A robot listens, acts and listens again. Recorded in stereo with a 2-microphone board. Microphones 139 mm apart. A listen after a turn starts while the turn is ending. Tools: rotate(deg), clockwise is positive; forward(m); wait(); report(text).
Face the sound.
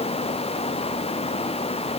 wait()
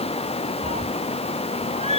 rotate(50)
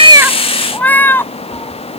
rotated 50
rotate(-15)
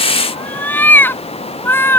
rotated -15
rotate(-15)
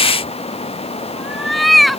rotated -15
report("Found it: a cat meowing, straight ahead.")